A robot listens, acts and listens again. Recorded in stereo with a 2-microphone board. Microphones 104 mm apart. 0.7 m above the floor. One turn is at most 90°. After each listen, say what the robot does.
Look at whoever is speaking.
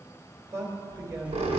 Turn 30° right.
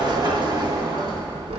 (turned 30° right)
Keep listening.
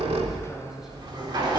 Keep listening.
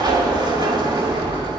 I heard a man speaking, but can't make it out now. It was about straight ahead or 120° right.